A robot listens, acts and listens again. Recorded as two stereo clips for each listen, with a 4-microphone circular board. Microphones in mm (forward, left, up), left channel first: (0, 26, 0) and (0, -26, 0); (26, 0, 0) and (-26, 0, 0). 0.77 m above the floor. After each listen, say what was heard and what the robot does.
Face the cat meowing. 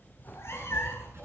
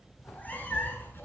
The cat meowing: 55° left. Turn 55° left.
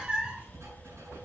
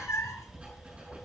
The cat meowing is now 20° right. Turn 20° right.
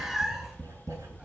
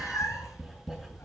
The cat meowing is now 10° right. Turn 10° right.
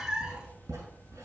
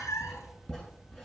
The cat meowing is now 15° right. Turn 15° right.
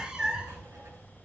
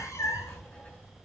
The cat meowing is now 15° right. Turn 15° right.
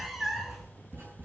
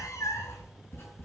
Found it: a cat meowing, straight ahead, 1 to 2 m away.